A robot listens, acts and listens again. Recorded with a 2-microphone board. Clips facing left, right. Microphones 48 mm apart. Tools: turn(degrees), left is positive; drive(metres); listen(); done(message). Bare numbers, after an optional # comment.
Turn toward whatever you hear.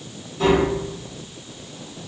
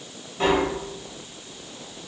# The tapping: about 40° right or 140° right.
turn(-40)
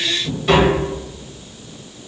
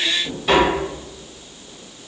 done("Found it: tapping, straight ahead.")